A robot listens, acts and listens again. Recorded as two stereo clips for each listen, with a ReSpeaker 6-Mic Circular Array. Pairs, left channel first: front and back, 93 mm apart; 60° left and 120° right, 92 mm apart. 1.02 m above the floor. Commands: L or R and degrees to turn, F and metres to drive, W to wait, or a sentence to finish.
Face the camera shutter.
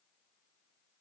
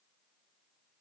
W
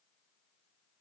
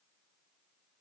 W
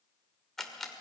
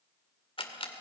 L85
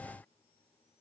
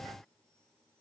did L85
W
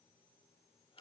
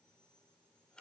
W
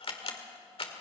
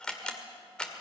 R20
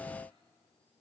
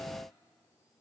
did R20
W
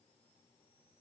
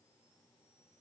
W
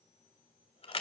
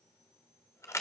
Found it: a camera shutter, straight ahead, 2 to 4 m away.